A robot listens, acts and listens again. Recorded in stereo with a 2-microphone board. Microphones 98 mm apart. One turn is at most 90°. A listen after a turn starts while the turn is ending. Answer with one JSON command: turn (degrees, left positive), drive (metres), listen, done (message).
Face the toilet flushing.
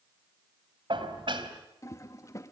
{"turn": 35}
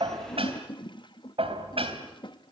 {"turn": 90}
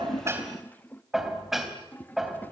{"turn": 25}
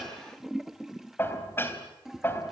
{"done": "Found it: a toilet flushing, straight ahead."}